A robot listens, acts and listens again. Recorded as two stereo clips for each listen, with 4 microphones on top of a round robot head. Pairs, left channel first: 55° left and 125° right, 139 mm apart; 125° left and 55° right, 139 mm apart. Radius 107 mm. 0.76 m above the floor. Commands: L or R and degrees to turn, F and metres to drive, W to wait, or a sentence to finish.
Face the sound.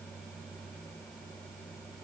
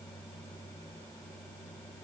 W
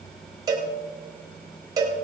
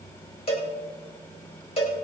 L170
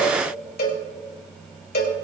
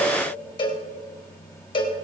L65
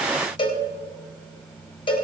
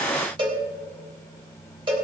Found it: a cowbell, straight ahead, 2 to 4 m away.